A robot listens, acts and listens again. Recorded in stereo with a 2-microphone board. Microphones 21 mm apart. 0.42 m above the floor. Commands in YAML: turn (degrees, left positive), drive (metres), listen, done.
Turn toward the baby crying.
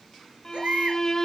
turn: -90
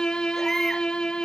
listen: true
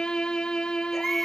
turn: 10
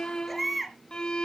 done: "Facing the baby crying, 2 to 4 m away."